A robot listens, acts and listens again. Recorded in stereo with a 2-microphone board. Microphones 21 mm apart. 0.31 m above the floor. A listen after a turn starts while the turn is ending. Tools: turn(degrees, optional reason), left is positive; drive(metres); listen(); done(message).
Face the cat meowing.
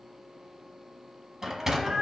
turn(degrees=-35, reason="The cat meowing: about 35° right or 145° right.")
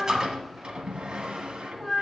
turn(degrees=10, reason="So it is at 10° left.")
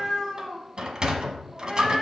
turn(degrees=10, reason="The cat meowing is now 10° left.")
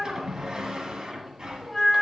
done("Found it: a cat meowing, straight ahead.")